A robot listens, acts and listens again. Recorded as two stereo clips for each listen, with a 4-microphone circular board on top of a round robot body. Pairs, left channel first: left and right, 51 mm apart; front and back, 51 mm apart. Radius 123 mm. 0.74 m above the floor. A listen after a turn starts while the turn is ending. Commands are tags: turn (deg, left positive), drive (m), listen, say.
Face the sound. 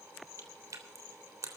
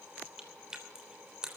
<turn deg="-105"/>
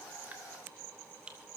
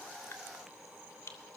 <turn deg="-20"/>
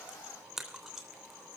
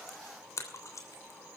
<say>Facing the chewing.</say>